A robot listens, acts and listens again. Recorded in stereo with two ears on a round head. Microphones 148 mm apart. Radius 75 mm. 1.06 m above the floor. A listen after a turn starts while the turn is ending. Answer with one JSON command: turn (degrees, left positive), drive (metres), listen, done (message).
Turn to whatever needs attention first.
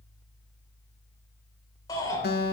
{"turn": 20}
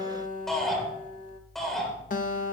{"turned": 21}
{"done": "Found it: a shout, straight ahead, over 4 m away."}